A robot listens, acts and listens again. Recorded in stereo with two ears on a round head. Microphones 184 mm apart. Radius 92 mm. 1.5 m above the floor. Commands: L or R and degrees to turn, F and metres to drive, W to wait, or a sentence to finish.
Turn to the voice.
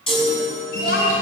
L50
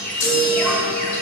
W
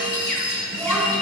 Facing the child speaking.